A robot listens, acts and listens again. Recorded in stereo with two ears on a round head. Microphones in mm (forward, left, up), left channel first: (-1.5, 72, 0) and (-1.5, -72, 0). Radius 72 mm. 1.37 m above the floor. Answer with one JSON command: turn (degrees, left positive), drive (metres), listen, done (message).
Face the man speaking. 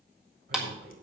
{"turn": -90}
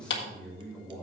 {"done": "Found it: a man speaking, straight ahead, over 4 m away."}